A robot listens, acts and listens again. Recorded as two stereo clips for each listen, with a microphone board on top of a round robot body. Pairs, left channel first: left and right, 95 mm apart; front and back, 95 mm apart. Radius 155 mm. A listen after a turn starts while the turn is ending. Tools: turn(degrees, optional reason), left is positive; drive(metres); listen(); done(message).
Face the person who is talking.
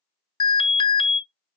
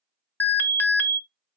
listen()
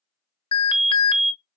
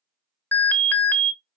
listen()
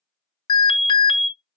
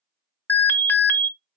done("I can't make out anyone speaking, only an alarm.")